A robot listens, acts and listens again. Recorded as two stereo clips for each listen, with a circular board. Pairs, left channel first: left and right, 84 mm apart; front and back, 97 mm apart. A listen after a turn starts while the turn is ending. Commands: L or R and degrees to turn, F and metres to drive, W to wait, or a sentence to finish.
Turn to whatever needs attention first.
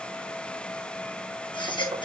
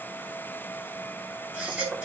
L105
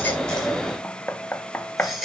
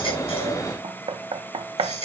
Found it: a baby crying, straight ahead.